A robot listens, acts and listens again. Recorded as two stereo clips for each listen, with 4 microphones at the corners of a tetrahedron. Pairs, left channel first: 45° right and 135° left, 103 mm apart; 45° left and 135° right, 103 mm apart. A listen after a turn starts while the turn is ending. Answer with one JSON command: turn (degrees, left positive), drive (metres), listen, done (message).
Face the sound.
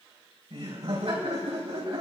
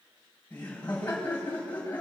{"turn": 115}
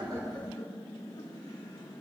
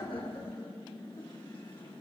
{"done": "Found it: laughter, straight ahead, over 4 m away."}